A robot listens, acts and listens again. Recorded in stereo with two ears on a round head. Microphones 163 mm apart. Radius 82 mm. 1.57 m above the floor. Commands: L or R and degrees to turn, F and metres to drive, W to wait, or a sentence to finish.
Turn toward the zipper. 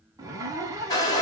R20
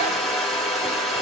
W
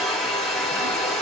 W
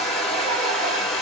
I heard a zipper, but can't make it out now. It was about straight ahead or 140° right.